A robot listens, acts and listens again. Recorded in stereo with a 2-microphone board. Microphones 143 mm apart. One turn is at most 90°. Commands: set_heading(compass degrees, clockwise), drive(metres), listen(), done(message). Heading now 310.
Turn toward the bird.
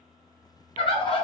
set_heading(270)
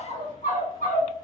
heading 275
set_heading(185)
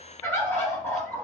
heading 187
set_heading(172)
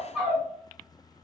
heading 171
done("Facing the bird, 1 to 2 m away.")